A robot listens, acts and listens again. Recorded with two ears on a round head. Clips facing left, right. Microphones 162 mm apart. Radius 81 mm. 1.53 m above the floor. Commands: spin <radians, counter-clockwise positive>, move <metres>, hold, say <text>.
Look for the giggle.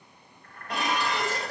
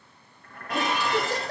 spin -0.87
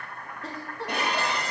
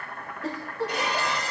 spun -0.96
say Facing the giggle, 1 to 2 m away.